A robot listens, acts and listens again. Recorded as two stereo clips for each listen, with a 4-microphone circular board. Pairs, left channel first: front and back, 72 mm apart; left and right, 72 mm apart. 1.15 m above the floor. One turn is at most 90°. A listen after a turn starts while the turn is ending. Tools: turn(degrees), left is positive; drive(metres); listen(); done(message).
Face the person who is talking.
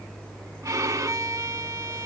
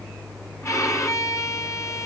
listen()
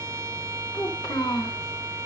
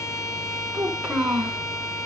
turn(degrees=-10)
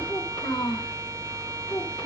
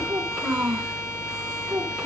done("Facing the child speaking.")